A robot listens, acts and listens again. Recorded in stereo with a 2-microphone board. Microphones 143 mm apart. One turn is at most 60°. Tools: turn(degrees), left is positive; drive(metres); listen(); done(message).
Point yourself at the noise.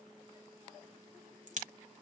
turn(degrees=-60)
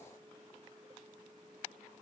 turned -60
listen()
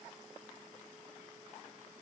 done("I heard a crack, but can't make it out now. It was about straight ahead or 60° right.")